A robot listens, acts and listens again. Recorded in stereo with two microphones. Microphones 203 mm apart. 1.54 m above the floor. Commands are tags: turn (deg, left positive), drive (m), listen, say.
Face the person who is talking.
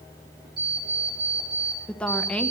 <turn deg="30"/>
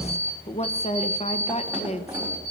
<turn deg="145"/>
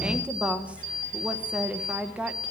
<say>Found it: a woman speaking, straight ahead, 1 to 2 m away.</say>